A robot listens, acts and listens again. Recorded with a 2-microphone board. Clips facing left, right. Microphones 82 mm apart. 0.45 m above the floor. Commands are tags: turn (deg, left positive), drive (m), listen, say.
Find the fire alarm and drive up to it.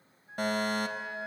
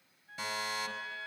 <turn deg="55"/>
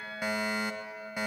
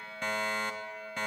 <turn deg="10"/>
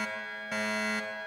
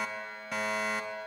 <drive m="1.0"/>
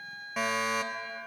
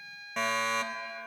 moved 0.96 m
<drive m="1.0"/>
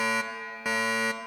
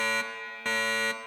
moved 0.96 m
<turn deg="15"/>
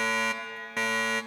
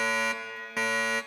<drive m="1.0"/>
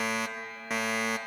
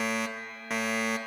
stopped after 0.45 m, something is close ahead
<say>Arrived at the fire alarm, straight ahead.</say>